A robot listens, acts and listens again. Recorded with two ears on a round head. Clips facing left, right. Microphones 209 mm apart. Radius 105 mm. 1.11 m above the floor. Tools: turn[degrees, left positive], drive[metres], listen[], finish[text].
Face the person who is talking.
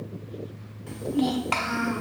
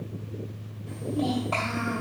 Action: turn[90]
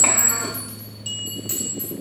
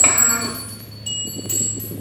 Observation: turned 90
Action: listen[]
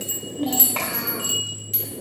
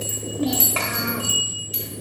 Action: finish[Facing the child speaking, 1 to 2 m away.]